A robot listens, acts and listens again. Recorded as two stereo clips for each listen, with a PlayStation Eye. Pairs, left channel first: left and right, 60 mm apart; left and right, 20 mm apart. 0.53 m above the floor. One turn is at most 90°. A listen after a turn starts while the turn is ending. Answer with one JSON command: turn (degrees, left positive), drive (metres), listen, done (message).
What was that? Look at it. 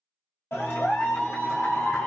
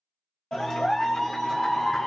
{"turn": 40}
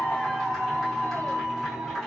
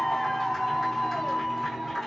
{"done": "Found it: a clap, straight ahead."}